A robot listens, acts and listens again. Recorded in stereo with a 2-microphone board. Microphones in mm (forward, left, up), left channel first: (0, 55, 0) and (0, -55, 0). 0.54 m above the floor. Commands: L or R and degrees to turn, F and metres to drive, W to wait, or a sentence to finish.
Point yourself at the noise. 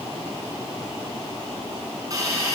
R35
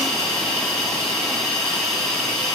Found it: a hiss, straight ahead.